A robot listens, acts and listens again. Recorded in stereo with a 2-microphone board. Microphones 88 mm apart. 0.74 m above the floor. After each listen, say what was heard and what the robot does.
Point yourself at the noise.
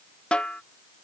Turn 30° left.
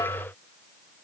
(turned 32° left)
Keep listening.
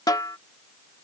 So it is at 135° left. Turn 135° left.
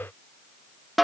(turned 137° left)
Found it: a snare drum, straight ahead.